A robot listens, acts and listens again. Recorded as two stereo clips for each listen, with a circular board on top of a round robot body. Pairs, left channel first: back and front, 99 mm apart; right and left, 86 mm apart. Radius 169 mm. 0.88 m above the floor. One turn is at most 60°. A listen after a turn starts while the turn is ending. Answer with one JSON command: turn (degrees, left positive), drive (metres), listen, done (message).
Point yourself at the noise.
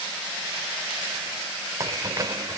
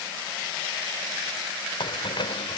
{"turn": -60}
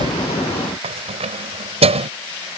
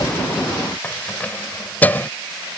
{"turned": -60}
{"turn": -20}
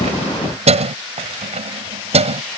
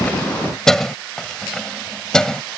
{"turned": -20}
{"done": "Found it: keys jangling, straight ahead."}